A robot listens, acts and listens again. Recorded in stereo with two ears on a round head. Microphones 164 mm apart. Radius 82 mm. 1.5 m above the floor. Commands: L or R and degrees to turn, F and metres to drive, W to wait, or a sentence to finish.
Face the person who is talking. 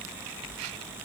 W
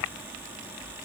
W
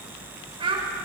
R30
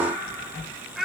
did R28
Found it: a child speaking, straight ahead, 2 to 4 m away.